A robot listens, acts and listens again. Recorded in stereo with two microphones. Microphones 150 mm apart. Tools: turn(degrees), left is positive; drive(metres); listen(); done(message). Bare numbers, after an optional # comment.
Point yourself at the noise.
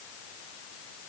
listen()
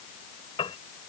# The piano: about 35° left or 145° left.
turn(35)
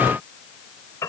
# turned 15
# So it is at 20° left.
turn(20)
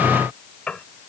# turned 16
done("Found it: a piano, straight ahead.")